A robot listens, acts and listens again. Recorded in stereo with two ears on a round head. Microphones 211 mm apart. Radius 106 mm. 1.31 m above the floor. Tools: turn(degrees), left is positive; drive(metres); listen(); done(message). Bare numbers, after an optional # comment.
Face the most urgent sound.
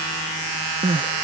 # The crying: about 25° right or 155° right.
turn(-25)
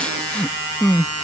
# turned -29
done("Found it: crying, straight ahead.")